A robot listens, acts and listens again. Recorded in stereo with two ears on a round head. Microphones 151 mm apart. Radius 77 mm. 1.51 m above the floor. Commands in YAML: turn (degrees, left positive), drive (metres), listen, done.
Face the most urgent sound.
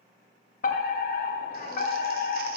turn: 55
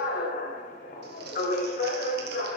turn: 60
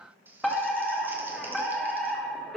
done: "Facing the fire alarm, 1 to 2 m away."